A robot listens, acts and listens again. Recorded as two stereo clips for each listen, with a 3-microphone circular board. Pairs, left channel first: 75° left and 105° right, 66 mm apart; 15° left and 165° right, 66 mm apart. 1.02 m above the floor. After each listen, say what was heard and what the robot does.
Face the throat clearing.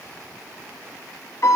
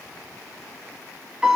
Keep listening.
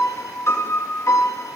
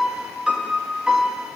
Keep listening.
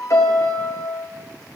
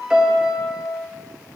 I can't make out throat clearing, only a piano.